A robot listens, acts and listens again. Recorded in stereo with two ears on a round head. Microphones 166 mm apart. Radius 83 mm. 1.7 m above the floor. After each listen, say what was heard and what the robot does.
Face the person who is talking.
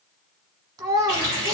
The child speaking: about 20° right or 160° right. Turn 20° right.
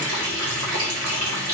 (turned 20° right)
Keep listening.
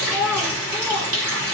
Found it: a child speaking, straight ahead.